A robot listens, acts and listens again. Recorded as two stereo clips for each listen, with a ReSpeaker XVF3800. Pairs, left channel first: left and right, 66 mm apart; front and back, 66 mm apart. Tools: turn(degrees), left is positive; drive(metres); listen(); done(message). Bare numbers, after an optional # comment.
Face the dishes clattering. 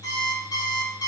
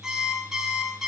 listen()
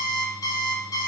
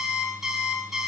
listen()
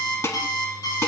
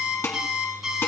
# The dishes clattering: 45° left.
turn(45)
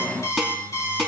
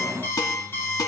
listen()
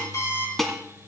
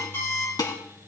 done("Facing the dishes clattering.")